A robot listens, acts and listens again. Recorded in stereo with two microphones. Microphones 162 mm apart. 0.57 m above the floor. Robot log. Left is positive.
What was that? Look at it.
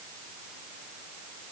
cmd idle
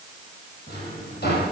cmd yaw +90
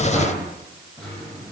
end: Facing the drawer.